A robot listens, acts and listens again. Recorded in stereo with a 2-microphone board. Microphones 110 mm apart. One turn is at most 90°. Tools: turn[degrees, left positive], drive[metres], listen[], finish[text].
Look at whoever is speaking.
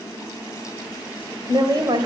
Thought: The woman speaking: about 40° right or 140° right.
Action: turn[-40]
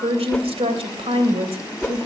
Thought: So it is at 100° right.
Action: turn[-90]
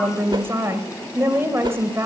Thought: The woman speaking is now 25° right.
Action: turn[-25]
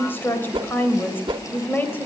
Thought: The woman speaking is now 20° left.
Action: turn[20]
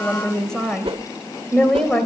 Action: finish[Facing the woman speaking, 2 to 4 m away.]